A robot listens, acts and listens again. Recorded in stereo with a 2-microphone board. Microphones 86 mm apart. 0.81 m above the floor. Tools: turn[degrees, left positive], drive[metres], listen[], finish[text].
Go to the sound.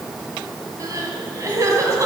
Thought: The crying: about 40° right or 140° right.
Action: turn[-40]
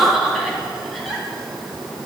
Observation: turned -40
Action: drive[1.0]
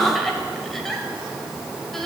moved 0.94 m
Action: drive[1.0]
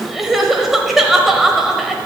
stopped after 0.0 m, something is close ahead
Action: finish[Arrived at the crying, straight ahead.]